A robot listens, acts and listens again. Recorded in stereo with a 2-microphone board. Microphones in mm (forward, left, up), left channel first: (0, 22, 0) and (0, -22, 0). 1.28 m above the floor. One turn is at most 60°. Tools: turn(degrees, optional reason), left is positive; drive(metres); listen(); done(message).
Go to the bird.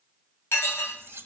listen()
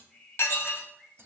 turn(degrees=30, reason="The bird: about 30° left or 150° left.")
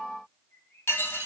turn(degrees=60, reason="So it is at 120° left.")
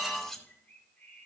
turn(degrees=40, reason="The bird is now 40° left.")
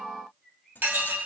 drive(metres=1.0)
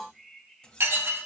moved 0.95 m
drive(metres=1.0)
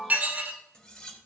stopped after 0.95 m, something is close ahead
listen()
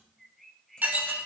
done("I am next to the bird.")